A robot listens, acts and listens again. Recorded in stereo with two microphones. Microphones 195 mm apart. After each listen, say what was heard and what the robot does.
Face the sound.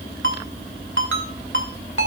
Turn 90° right.
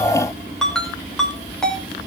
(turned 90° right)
Facing the ringtone, 2 to 4 m away.